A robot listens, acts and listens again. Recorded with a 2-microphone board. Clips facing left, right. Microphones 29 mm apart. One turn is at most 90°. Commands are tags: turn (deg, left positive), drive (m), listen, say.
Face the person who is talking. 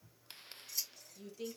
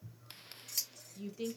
<turn deg="-30"/>
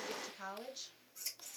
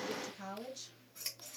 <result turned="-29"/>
<turn deg="15"/>
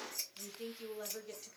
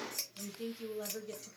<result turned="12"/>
<say>Found it: a woman speaking, straight ahead, 1 to 2 m away.</say>